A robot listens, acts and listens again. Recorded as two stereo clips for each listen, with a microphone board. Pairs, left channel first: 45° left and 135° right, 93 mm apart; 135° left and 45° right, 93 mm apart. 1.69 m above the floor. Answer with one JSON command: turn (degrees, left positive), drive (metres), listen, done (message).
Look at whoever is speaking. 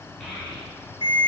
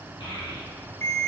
{"turn": 130}
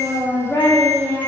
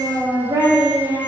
{"done": "Found it: a child speaking, straight ahead."}